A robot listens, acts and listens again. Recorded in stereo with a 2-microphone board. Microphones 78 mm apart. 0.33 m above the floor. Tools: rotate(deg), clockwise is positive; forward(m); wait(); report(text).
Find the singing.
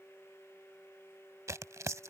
wait()
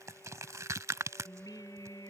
rotate(-55)
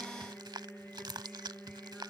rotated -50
rotate(-10)
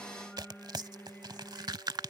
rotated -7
report("Facing the singing.")